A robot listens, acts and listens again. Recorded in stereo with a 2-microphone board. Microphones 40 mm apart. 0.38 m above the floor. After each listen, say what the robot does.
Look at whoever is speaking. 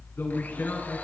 Turn 75° left.
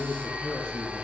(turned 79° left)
Turn 15° left.
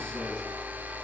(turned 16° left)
Keep listening.
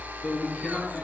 Turn 20° left.
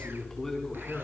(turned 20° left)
Turn 10° left.
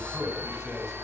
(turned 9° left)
Found it: a man speaking, straight ahead.